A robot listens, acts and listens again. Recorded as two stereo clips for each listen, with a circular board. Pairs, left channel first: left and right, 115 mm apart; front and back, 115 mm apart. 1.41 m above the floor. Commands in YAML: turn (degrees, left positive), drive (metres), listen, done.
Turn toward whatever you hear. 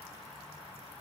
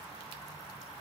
listen: true
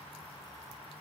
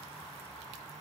listen: true
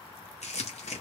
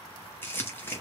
turn: 75
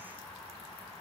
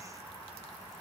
listen: true
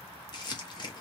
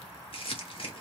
turn: 40
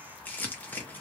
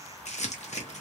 turn: 15
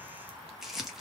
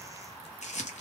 done: "Found it: crumpling, straight ahead, under 1 m away."